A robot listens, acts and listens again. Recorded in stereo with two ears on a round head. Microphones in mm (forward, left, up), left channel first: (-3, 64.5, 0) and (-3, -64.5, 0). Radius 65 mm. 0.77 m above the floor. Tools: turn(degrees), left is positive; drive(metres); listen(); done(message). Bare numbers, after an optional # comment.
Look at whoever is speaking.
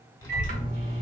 # The child speaking: about 25° left or 155° left.
turn(25)
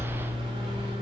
done("Found it: a child speaking, straight ahead, 1 to 2 m away.")